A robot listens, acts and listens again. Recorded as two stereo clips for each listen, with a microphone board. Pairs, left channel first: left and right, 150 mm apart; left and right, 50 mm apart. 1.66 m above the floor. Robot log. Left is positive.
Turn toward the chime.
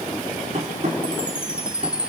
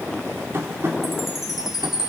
cmd yaw -30
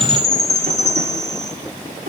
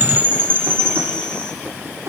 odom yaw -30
note: So it is at 25° left.
cmd yaw +25
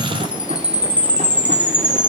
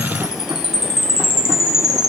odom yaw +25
note: The chime is now 10° right.
cmd yaw -10
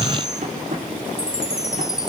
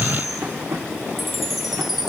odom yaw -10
end: Facing the chime.